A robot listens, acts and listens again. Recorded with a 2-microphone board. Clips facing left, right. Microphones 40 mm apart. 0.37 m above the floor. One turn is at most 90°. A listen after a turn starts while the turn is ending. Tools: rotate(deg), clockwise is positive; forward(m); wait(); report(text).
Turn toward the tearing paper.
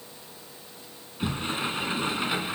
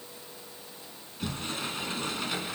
wait()
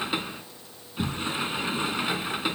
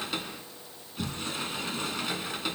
wait()
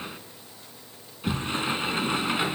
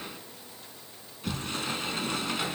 report("I can't make out tearing paper to turn to.")